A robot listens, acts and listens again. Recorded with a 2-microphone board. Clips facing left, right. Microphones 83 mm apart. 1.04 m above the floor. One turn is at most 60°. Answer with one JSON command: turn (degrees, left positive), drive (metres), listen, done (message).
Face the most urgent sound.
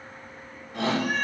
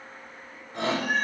{"turn": -35}
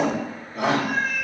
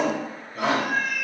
{"done": "Facing the shout."}